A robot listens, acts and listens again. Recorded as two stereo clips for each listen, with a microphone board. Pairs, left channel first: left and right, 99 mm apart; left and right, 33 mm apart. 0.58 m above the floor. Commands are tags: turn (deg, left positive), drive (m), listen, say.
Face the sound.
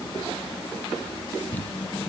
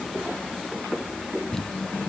<turn deg="15"/>
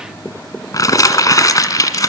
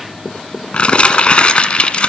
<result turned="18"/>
<turn deg="145"/>
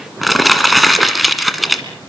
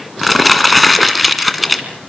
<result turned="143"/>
<say>Found it: crumpling, straight ahead, 1 to 2 m away.</say>